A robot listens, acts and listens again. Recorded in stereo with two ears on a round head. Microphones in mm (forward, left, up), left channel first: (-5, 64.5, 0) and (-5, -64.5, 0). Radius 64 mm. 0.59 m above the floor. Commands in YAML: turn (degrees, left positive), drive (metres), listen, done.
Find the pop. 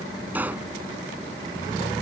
turn: -30
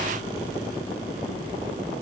listen: true
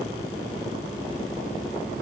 done: "I heard a pop, but can't make it out now. It was about 20° left or 140° right."